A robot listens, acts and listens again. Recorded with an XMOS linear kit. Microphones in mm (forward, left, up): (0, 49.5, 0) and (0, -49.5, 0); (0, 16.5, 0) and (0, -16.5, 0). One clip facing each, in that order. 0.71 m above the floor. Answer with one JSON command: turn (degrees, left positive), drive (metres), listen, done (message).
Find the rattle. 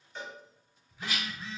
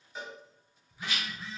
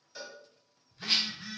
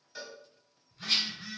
{"turn": 35}
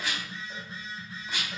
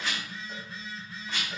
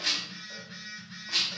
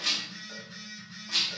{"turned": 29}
{"turn": 15}
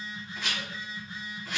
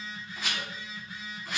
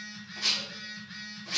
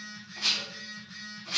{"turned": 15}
{"done": "Found it: a rattle, straight ahead, 1 to 2 m away."}